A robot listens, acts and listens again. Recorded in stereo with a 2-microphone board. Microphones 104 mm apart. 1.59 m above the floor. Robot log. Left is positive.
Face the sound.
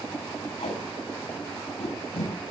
cmd yaw +90
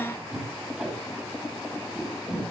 end: Found it: tape being pulled, straight ahead, over 4 m away.